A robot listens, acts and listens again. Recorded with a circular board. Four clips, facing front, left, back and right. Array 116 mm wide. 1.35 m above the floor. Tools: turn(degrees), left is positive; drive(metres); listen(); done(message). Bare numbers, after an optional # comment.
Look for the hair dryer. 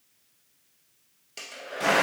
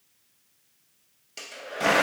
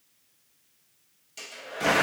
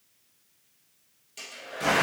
# The hair dryer: 40° left.
turn(40)
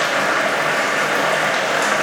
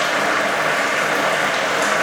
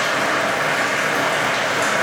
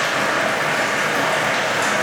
listen()
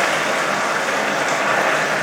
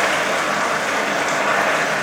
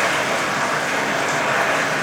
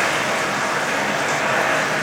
listen()
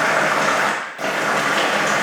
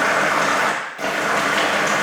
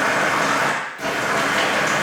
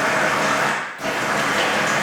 done("I heard a hair dryer from this way, but can't make it out now.")